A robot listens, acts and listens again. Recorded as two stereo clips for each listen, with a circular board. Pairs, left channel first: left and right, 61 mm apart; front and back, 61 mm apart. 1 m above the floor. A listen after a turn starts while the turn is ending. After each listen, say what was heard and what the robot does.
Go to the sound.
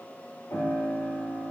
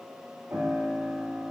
The piano: 130° left. Turn 130° left.
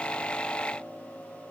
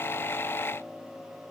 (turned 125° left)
Keep listening.
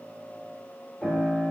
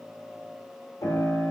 Drive 1.0 m forward.
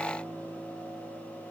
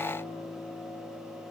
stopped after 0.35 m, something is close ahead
Blocked. The piano is further on, straight ahead.